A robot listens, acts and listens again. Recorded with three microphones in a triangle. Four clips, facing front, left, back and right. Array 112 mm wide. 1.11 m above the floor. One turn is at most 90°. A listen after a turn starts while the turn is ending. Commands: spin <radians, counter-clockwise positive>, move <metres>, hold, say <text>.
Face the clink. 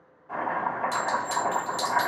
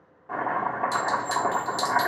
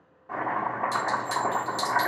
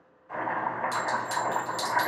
spin 0.87
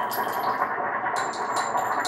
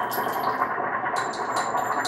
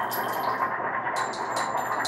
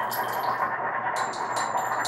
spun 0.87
say Found it: a clink, straight ahead, 1 to 2 m away.